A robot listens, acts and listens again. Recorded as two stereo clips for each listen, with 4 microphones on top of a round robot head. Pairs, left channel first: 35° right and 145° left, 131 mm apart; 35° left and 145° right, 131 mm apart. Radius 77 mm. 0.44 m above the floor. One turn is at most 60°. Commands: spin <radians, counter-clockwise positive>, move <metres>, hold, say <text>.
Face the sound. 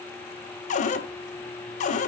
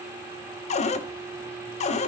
say Facing the cupboard door.